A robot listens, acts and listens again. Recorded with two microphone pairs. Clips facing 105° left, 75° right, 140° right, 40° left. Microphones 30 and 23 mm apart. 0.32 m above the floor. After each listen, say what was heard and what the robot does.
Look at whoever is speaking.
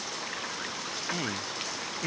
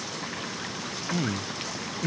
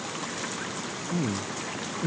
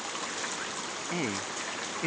The man speaking: 30° left. Turn 30° left.
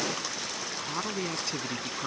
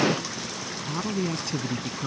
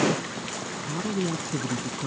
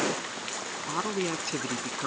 The man speaking is now 20° left. Turn 20° left.
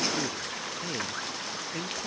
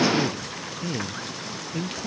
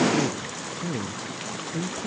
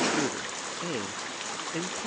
The man speaking is now 20° left. Turn 20° left.
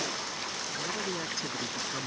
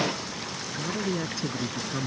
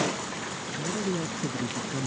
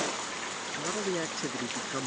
Facing the man speaking.